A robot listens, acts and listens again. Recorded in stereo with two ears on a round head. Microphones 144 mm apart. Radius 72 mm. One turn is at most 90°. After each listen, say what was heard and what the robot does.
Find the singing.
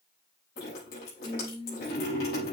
The singing: about 75° left or 105° left. Turn 75° left.
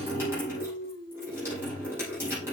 So it is at 25° left. Turn 25° left.
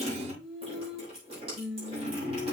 The singing is now 10° right. Turn 10° right.
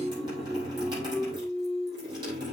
Facing the singing.